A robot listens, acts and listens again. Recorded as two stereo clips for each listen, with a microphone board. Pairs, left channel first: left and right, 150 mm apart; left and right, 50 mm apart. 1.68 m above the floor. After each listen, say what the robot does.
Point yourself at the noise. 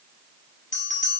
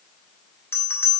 Turn 55° left.
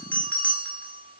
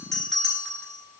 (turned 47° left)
Turn 10° left.
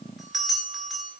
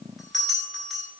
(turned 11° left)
Facing the bell, over 4 m away.